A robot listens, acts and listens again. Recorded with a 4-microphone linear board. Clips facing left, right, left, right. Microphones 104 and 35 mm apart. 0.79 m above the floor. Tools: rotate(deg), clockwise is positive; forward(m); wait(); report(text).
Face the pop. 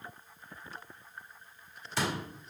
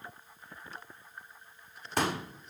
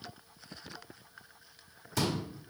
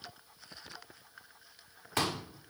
rotate(50)
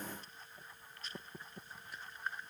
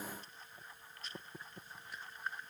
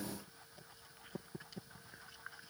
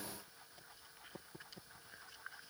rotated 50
wait()
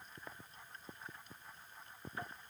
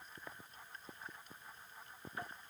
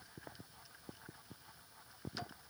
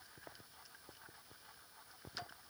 report("I heard a pop, but can't make it out now. It was about straight ahead or 80° right.")